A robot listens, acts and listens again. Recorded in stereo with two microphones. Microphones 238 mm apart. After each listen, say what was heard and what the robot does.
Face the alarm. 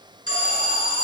The alarm: about 70° left or 110° left. Turn 70° left.
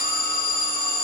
So it is at 40° left. Turn 40° left.
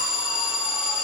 Found it: an alarm, straight ahead, over 4 m away.